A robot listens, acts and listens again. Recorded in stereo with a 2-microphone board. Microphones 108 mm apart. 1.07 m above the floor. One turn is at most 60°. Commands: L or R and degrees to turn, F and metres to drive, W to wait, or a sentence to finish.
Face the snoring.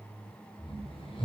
L55
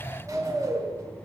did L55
Found it: snoring, straight ahead, 2 to 4 m away.